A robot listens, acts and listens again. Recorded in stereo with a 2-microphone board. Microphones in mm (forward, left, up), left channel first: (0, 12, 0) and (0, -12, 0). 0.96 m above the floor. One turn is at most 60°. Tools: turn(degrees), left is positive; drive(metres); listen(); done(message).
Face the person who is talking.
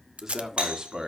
turn(degrees=-35)
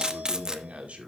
turn(degrees=-60)
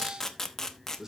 turn(degrees=-20)
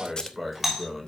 done("Facing the man speaking.")